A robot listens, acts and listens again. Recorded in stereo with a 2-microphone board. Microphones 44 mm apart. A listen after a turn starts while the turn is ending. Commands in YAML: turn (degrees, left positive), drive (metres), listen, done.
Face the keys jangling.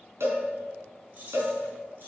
turn: -50
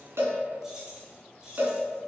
turn: -20
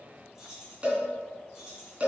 turn: -15
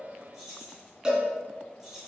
turn: -10
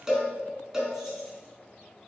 listen: true
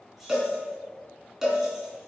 listen: true
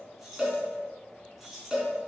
done: "Found it: keys jangling, straight ahead."